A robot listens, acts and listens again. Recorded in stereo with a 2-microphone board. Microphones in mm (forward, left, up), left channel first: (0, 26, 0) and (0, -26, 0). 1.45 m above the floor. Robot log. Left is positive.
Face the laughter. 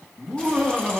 cmd yaw -30
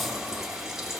cmd idle
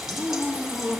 note: So it is at 25° left.
cmd yaw +25
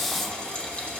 cmd idle
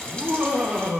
note: The laughter is now 10° right.
cmd yaw -10
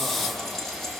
cmd idle
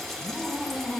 end: Facing the laughter.